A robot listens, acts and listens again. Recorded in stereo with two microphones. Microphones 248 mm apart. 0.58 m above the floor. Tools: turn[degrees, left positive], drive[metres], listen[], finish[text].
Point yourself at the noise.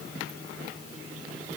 Action: listen[]
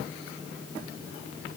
Action: listen[]
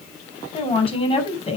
Thought: The woman speaking: about 25° left or 155° left.
Action: turn[25]
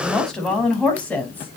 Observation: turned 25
Action: finish[Found it: a woman speaking, straight ahead, over 4 m away.]